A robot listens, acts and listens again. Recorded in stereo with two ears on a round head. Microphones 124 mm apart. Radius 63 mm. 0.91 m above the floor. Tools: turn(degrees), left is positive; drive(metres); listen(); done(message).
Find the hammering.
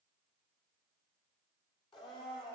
listen()
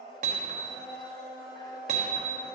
turn(degrees=-50)
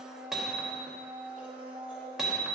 done("Facing the hammering.")